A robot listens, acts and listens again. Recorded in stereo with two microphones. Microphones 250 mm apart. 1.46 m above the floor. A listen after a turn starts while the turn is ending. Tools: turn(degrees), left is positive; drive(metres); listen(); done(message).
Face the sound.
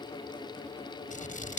turn(degrees=30)
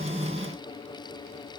listen()
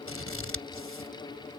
turn(degrees=120)
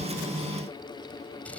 listen()
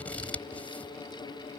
done("Facing the scissors.")